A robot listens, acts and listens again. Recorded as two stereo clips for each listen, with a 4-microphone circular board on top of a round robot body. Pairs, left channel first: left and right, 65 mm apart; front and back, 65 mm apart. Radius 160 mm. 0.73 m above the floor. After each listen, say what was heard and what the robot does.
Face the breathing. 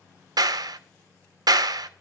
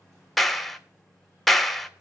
Keep listening.
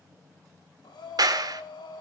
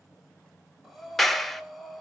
The breathing: 90° left. Turn 90° left.
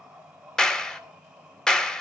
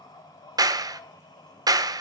The breathing is now 15° right. Turn 15° right.
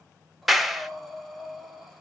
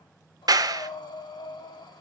Found it: breathing, straight ahead, 1 to 2 m away.